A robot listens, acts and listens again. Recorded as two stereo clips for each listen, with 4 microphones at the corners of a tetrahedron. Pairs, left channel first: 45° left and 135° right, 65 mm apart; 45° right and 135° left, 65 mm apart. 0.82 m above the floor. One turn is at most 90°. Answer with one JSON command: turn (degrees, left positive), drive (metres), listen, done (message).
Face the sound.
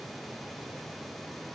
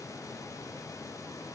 {"listen": true}
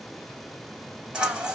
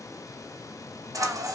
{"turn": 90}
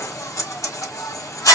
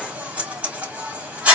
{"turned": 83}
{"turn": 70}
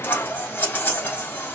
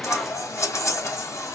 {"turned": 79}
{"turn": -10}
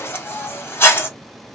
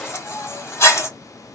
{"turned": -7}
{"done": "Facing the scissors."}